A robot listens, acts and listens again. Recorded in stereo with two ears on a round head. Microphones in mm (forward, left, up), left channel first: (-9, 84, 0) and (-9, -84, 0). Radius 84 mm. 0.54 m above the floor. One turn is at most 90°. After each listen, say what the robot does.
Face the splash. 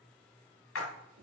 Turn 90° left.
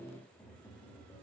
I heard a splash from this way, but can't make it out now.